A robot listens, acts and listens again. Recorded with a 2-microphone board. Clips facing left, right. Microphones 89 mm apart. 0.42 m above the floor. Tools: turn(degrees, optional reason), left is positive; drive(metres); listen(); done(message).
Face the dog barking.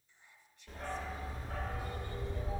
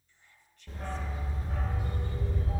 turn(degrees=-20, reason="The dog barking: about 20° right or 160° right.")
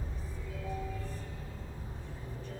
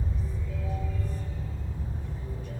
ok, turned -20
turn(degrees=-30, reason="The dog barking: about 30° right or 150° right.")
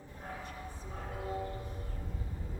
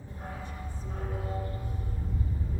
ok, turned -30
turn(degrees=-125, reason="So it is at 125° right.")
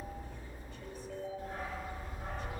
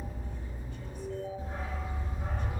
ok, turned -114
turn(degrees=-10, reason="The dog barking is now 10° right.")
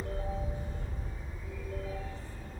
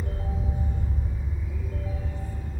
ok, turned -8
done("Found it: a dog barking, straight ahead.")